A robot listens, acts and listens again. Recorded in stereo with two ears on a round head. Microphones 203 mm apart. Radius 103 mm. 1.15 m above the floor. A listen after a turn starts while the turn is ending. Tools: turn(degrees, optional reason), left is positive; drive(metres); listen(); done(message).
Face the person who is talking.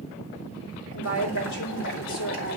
turn(degrees=60, reason="The woman speaking: about 60° left or 120° left.")
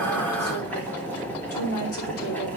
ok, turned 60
turn(degrees=65, reason="So it is at 65° left.")
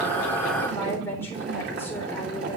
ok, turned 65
turn(degrees=10, reason="The woman speaking is now 10° left.")
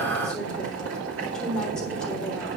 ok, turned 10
done("Found it: a woman speaking, straight ahead.")